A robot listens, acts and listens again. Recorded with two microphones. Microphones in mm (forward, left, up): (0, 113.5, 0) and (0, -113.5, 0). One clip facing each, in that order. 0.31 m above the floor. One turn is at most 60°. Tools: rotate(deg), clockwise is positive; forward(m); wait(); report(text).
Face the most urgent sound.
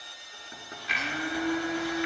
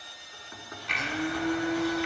wait()
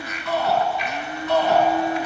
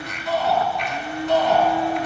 rotate(-60)
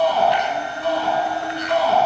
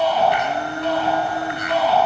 rotate(-55)
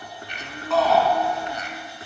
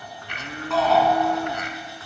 report("Found it: a shout, straight ahead, 2 to 4 m away.")